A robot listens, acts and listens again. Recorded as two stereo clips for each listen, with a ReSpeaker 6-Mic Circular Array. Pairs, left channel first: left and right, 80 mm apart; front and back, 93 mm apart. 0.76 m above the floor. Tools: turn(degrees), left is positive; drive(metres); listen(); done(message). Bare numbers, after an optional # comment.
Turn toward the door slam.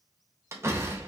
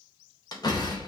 # The door slam: 35° right.
turn(-35)
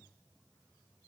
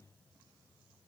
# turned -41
done("I heard a door slam from this way, but can't make it out now.")